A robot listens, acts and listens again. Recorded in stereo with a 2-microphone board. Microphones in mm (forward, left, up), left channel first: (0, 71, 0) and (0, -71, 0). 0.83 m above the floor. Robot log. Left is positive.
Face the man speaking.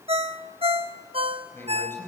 note: The man speaking: about 15° left or 165° left.
cmd yaw +15
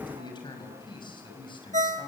note: The man speaking: about 35° left or 145° left.
cmd yaw +35
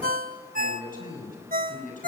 note: So it is at 105° left.
cmd yaw +105
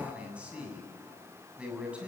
note: The man speaking is now 10° right.
cmd yaw -10
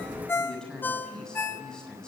end: Facing the man speaking.